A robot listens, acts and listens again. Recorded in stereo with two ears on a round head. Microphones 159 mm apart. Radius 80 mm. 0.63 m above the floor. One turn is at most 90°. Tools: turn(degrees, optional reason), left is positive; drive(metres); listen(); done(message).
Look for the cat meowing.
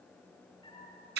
turn(degrees=25, reason="The cat meowing: about 25° left or 155° left.")
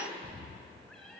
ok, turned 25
done("Found it: a cat meowing, straight ahead.")